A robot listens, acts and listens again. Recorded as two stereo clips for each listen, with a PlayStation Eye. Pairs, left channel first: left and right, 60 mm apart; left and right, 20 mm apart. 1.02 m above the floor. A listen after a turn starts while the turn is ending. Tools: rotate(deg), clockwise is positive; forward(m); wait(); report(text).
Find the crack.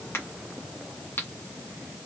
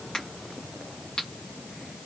rotate(-40)
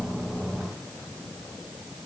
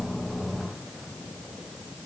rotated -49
wait()
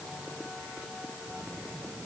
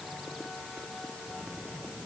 report("I heard a crack, but can't make it out now. It was about 10° right or 90° left.")